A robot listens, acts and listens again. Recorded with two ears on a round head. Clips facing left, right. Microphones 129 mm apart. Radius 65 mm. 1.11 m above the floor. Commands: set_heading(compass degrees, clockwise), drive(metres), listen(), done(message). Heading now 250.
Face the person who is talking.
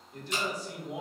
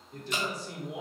set_heading(315)
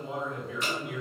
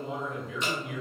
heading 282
set_heading(347)
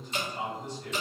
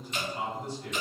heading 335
set_heading(345)
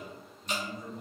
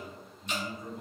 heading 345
done("Facing the man speaking, 1 to 2 m away.")